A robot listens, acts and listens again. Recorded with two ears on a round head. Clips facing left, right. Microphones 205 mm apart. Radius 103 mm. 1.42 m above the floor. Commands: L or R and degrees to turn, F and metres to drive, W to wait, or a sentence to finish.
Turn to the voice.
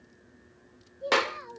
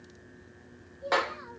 L35
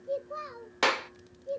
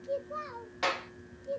Found it: a child speaking, straight ahead, 2 to 4 m away.